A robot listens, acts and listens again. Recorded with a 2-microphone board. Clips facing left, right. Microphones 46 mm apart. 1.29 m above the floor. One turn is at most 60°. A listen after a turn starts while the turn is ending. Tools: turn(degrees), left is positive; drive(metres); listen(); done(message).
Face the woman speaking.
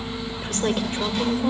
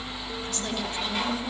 turn(degrees=55)
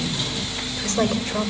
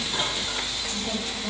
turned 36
turn(degrees=60)
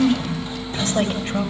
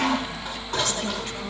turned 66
turn(degrees=25)
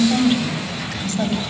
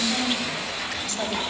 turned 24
done("Found it: a woman speaking, straight ahead.")